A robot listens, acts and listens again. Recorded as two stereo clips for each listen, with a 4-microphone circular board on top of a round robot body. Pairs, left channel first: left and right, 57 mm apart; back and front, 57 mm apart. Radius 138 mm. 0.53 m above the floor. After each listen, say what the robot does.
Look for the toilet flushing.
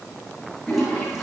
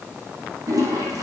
Found it: a toilet flushing, straight ahead, over 4 m away.